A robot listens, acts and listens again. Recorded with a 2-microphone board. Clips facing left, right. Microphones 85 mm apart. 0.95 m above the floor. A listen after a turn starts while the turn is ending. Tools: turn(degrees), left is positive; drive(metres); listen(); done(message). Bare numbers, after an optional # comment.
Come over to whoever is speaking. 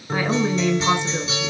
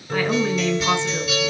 turn(30)
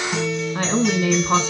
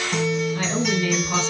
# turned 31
# So it is at 135° left.
turn(135)
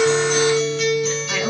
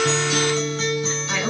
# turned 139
drive(1.0)
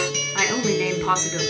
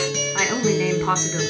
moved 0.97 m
drive(1.0)
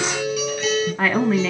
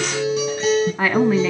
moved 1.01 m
drive(1.0)
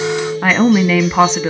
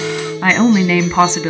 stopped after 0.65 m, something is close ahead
done("I am next to the woman speaking.")